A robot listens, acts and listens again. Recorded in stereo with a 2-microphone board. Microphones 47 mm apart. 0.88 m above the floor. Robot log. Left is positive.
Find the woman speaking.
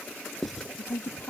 note: The woman speaking: about 65° left or 115° left.
cmd yaw +65
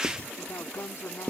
note: So it is at 65° left.
cmd yaw +65
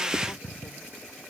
cmd idle
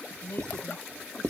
note: The woman speaking is now 50° left.
cmd yaw +50
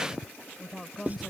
end: Found it: a woman speaking, straight ahead.